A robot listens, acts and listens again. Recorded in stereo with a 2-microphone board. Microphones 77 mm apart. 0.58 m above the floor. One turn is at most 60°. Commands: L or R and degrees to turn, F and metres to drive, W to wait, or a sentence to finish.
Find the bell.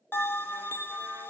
L25
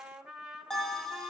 Facing the bell.